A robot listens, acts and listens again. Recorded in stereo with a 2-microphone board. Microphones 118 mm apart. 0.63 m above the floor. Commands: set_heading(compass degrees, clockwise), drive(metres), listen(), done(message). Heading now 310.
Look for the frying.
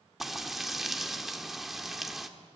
set_heading(280)
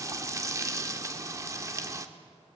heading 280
set_heading(310)
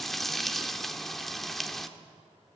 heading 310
done("Found it: frying, straight ahead, 1 to 2 m away.")